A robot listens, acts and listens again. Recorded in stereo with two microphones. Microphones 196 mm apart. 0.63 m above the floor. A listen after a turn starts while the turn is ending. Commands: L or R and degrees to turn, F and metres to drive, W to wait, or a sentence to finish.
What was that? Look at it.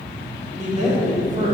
R40
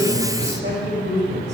R110
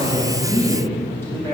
L15
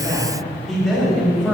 Facing the man speaking.